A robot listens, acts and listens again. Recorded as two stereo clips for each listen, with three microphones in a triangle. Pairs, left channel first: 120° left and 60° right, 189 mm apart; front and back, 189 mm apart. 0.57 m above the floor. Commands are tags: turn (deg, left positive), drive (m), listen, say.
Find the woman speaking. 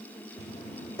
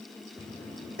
<listen/>
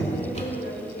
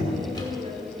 <turn deg="130"/>
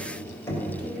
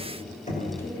<listen/>
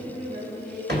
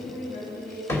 <turn deg="-25"/>
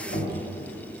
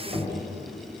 <listen/>
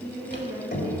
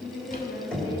<turn deg="15"/>
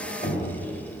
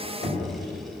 <listen/>
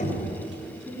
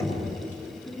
<say>Facing the woman speaking.</say>